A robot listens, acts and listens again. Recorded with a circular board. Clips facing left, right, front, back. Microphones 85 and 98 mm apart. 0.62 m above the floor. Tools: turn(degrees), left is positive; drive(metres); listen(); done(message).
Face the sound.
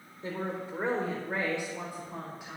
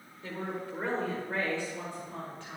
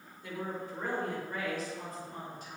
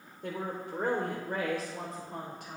turn(degrees=170)
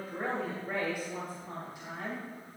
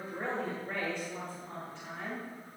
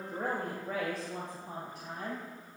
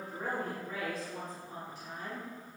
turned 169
turn(degrees=15)
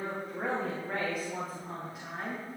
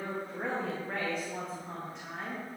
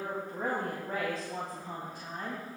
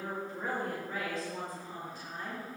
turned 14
done("Facing the woman speaking.")